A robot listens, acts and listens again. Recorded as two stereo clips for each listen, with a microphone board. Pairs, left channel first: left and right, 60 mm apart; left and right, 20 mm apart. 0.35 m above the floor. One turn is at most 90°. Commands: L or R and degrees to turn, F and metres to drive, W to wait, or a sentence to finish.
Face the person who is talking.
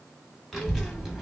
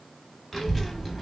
R30
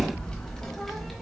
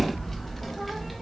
L30
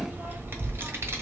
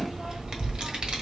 R45
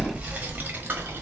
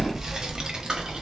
R35
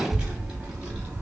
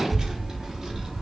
R20
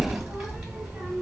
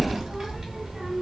Facing the child speaking.